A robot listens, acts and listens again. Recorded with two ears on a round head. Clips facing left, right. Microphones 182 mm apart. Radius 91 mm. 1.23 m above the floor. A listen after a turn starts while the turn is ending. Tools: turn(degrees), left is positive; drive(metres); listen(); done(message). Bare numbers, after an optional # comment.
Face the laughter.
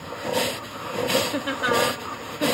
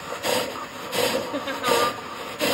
turn(30)
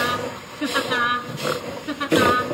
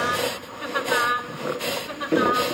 # So it is at 110° left.
turn(110)
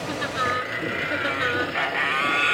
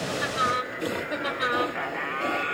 done("Facing the laughter.")